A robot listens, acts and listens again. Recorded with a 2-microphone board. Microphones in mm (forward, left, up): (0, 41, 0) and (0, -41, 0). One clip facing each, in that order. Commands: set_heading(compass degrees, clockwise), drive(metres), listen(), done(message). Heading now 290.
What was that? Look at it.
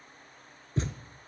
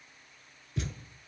set_heading(255)
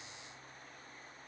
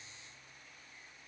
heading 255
listen()
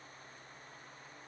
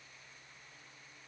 done("I heard a thud, but can't make it out now. It was about straight ahead or 110° left.")